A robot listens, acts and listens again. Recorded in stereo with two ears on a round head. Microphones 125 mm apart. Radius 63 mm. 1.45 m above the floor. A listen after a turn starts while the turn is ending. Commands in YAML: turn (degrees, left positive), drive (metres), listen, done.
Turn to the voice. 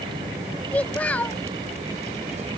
turn: 30
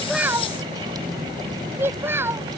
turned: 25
turn: -15
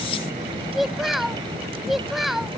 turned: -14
done: "Facing the child speaking."